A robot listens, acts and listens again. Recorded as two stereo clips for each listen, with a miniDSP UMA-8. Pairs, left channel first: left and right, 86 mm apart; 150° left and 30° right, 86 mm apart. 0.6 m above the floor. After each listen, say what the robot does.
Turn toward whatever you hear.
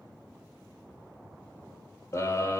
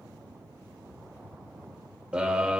Turn 45° left.
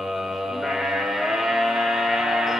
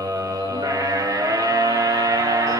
Found it: a scream, straight ahead, 1 to 2 m away.